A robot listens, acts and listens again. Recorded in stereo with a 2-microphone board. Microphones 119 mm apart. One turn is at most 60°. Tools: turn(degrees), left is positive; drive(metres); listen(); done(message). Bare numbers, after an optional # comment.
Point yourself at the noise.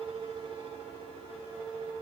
listen()
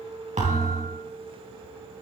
turn(-60)
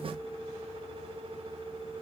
# Nothing new. It was at 30° right.
turn(-30)
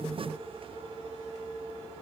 done("Facing where the thud came from. I can't hear it now.")